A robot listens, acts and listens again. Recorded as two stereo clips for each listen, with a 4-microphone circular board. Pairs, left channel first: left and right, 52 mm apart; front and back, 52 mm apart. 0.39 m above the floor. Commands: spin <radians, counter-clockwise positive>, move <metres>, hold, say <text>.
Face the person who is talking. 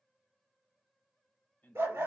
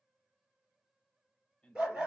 spin 1.13
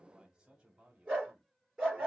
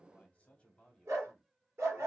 spin -1.31
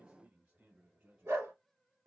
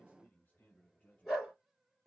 spin -0.79
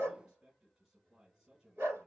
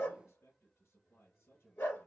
spin -0.17
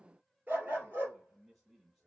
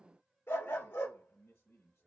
say Facing the man speaking.